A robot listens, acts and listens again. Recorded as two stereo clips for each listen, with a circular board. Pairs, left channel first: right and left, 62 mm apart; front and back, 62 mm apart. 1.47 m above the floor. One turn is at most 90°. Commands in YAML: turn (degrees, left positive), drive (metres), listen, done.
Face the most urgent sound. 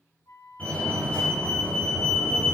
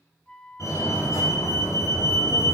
turn: -25
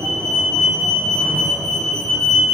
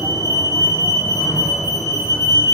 turn: -10
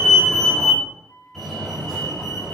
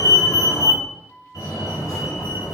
done: "Facing the fire alarm, over 4 m away."